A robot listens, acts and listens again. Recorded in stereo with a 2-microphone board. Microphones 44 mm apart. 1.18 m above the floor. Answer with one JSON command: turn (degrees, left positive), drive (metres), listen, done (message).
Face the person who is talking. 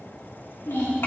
{"turn": 60}
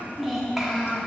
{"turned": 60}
{"turn": -15}
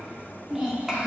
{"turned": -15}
{"turn": -15}
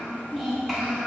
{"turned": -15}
{"done": "Found it: a child speaking, straight ahead."}